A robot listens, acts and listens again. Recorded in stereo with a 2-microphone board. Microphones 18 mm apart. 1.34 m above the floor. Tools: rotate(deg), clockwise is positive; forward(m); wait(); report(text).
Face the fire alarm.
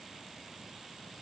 wait()
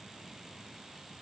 wait()
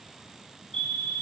rotate(-45)
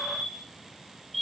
report("Facing the fire alarm.")